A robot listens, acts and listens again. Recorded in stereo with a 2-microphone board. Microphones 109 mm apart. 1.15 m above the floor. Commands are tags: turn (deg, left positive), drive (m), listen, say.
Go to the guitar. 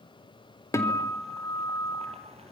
<turn deg="25"/>
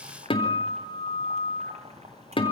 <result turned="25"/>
<turn deg="130"/>
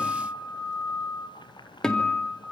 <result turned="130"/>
<drive m="1.0"/>
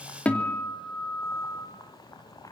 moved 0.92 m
<turn deg="10"/>
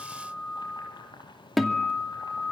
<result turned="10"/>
<drive m="1.0"/>
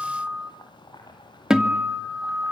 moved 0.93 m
<drive m="1.0"/>
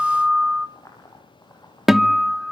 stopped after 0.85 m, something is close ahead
<say>Arrived at the guitar, straight ahead.</say>